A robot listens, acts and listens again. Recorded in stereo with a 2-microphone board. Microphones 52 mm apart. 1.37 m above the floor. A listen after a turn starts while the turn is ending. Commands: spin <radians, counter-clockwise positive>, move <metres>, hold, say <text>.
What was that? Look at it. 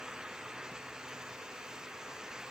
hold
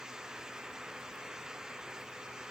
hold
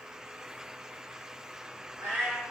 spin -0.96
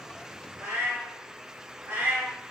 spin -0.96
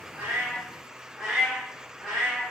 say Found it: a cat meowing, straight ahead, 1 to 2 m away.